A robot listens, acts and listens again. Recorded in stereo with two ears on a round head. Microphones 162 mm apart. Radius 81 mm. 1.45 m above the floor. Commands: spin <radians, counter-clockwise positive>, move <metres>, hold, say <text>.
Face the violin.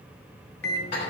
hold
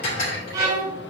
spin -0.35
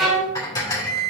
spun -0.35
say Found it: a violin, straight ahead, 2 to 4 m away.